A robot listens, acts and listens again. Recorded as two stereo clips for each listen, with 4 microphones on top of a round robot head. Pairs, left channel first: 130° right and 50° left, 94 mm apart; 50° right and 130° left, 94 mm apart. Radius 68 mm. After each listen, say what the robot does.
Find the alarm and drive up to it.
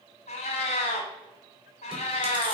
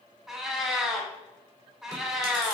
Keep listening.
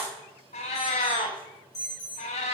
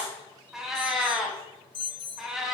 Turn 85° right.
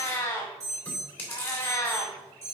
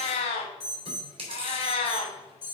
Drive 1.0 m forward.
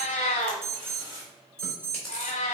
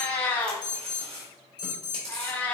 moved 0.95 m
Turn 10° right.
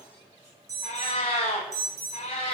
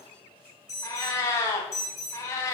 Drive 1.0 m forward.
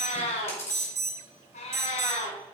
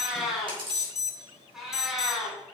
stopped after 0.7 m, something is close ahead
I am next to the alarm.